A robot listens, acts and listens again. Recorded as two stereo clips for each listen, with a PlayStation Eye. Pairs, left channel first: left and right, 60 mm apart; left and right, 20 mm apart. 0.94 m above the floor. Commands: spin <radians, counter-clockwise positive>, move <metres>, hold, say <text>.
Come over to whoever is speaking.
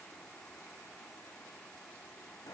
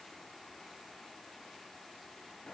hold
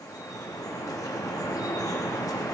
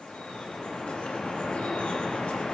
hold
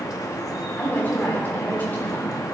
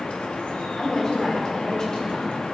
spin 0.61
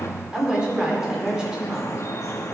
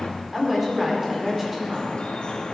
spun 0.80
spin -0.26
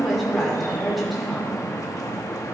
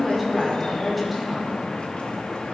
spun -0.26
move 1.0
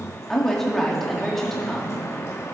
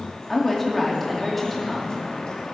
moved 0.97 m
move 1.0
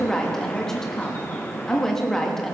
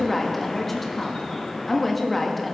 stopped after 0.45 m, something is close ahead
spin 0.17
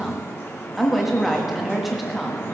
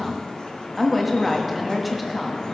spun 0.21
say I am next to the woman speaking.